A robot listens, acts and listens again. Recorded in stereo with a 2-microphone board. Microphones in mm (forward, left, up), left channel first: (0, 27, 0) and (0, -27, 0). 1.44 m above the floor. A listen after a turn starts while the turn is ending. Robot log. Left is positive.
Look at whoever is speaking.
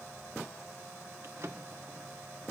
cmd idle
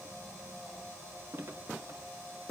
cmd idle
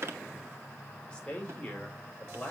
note: The man speaking: about 20° left or 160° left.
cmd yaw +20
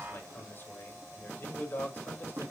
note: So it is at 145° left.
cmd yaw +145
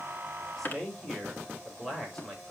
end: Facing the man speaking, over 4 m away.